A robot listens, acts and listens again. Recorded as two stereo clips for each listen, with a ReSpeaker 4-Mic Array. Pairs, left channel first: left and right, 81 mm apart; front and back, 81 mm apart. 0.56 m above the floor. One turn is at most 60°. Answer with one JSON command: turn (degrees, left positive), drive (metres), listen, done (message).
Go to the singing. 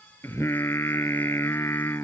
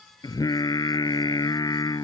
{"turn": 35}
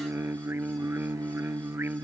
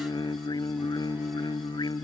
{"turn": -25}
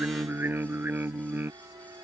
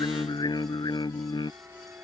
{"turn": -25}
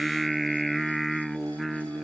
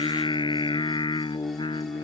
{"drive": 1.0}
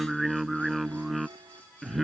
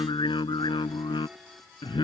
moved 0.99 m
{"drive": 1.0}
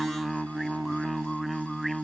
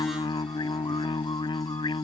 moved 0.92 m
{"drive": 1.0}
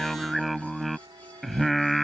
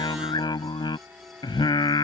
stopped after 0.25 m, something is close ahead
{"done": "Arrived at the singing, straight ahead."}